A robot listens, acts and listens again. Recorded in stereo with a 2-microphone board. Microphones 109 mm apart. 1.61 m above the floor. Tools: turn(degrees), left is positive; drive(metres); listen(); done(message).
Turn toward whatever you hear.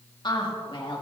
turn(degrees=55)
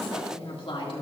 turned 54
turn(degrees=55)
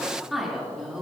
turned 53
done("Facing the woman speaking.")